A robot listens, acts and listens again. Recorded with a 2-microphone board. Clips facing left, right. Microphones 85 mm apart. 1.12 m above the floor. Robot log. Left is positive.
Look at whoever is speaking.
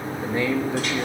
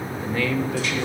note: The man speaking: about 25° left or 155° left.
cmd yaw +25
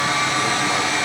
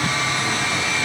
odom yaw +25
cmd idle
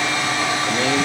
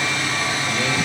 cmd idle
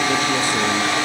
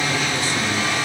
end: I heard a man speaking, but can't make it out now. It was about straight ahead or 130° left.